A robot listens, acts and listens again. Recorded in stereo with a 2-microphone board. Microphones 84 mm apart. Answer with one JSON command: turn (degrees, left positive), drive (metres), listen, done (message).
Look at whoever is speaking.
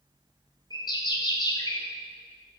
{"listen": true}
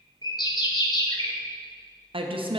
{"turn": -90}
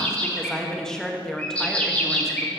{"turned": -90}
{"done": "Found it: a woman speaking, straight ahead."}